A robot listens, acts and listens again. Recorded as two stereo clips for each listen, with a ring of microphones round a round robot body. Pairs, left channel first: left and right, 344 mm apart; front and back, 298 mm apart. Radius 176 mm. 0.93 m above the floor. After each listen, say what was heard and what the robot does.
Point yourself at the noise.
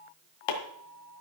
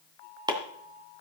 The chopping: 105° left. Turn 105° left.
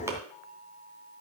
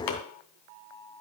Facing the chopping.